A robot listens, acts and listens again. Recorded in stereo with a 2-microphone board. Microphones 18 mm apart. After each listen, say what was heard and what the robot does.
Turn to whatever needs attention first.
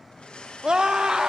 The scream: about 50° right or 130° right. Turn 50° right.
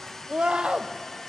So it is at 80° right. Turn 80° right.
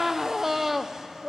The scream is now 15° right. Turn 15° right.
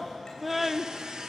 The scream is now 10° right. Turn 10° right.
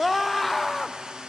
Facing the scream.